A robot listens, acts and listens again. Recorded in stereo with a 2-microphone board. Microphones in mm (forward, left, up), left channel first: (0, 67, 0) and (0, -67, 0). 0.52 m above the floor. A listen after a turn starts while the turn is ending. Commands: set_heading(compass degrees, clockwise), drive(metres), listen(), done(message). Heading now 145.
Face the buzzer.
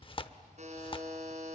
set_heading(205)
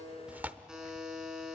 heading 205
done("Found it: a buzzer, straight ahead.")